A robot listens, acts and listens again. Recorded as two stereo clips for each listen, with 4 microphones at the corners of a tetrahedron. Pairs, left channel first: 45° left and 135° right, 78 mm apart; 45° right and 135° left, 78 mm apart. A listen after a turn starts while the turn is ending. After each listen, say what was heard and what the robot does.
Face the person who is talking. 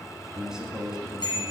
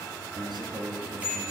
The man speaking: 145° left. Turn 145° left.
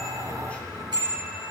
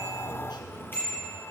Keep listening.
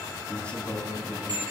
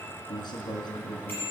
The man speaking is now 30° right. Turn 30° right.
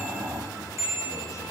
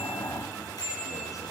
Keep listening.
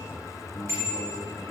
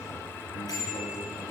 Keep listening.
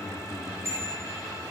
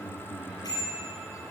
I heard a man speaking from this way, but can't make it out now.